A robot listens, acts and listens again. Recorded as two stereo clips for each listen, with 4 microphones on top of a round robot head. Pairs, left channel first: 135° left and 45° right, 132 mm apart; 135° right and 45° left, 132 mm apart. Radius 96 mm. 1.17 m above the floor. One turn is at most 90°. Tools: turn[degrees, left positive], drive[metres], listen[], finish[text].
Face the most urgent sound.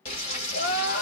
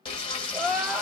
Thought: The crying: 130° left.
Action: turn[90]
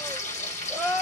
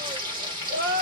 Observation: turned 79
Thought: The crying is now 50° left.
Action: turn[50]
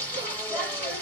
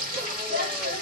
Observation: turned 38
Thought: Nothing new. It was at 15° left.
Action: turn[15]
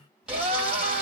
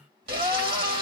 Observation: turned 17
Action: finish[Facing the crying.]